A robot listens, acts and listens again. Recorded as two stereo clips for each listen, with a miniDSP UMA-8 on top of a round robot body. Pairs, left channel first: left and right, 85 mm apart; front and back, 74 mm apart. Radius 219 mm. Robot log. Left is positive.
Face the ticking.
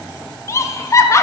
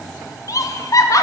cmd idle
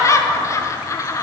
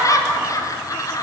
cmd idle
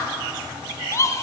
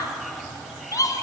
end: I can't make out ticking to turn to.